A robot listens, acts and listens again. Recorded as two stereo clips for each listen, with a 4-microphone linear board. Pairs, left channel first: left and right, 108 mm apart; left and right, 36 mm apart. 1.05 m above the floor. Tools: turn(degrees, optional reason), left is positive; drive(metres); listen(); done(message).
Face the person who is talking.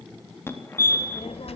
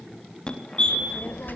turn(degrees=70, reason="The child speaking: about 70° left or 110° left.")
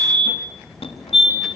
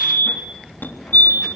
done("Found it: a child speaking, straight ahead, 2 to 4 m away.")